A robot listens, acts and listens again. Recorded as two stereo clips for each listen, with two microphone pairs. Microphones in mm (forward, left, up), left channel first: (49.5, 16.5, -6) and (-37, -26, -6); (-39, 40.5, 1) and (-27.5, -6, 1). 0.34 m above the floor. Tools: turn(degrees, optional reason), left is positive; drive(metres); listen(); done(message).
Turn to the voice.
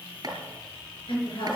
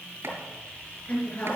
turn(degrees=50, reason="The woman speaking: 50° left.")
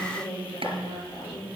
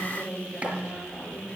turn(degrees=30, reason="The woman speaking is now 30° left.")
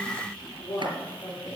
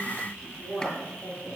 turn(degrees=-15, reason="The woman speaking is now 15° right.")
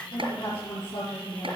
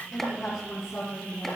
done("Facing the woman speaking.")